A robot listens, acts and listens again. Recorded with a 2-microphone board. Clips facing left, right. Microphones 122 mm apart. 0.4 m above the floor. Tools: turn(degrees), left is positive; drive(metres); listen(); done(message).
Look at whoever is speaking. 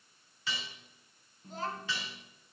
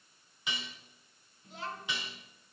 turn(degrees=40)
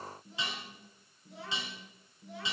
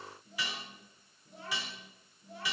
turn(degrees=100)
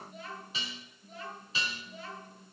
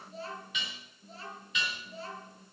turn(degrees=-35)
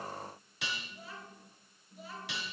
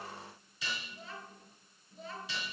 done("Facing the child speaking, over 4 m away.")